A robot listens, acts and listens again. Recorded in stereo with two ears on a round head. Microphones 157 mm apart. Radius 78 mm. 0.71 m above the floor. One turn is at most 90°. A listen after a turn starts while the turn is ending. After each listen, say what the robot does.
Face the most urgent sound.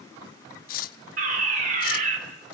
Turn 45° right.
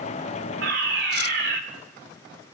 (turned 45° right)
Turn 80° right.
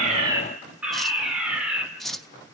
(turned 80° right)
Facing the fire alarm.